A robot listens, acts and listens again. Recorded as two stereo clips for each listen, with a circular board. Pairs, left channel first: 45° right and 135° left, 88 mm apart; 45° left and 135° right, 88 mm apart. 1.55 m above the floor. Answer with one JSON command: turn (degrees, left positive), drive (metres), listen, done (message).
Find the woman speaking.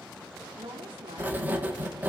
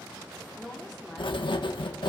{"turn": 135}
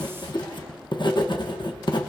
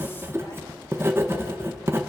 {"listen": true}
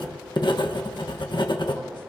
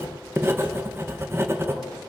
{"listen": true}
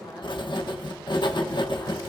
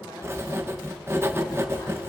{"done": "Facing where the woman speaking came from. I can't hear it now."}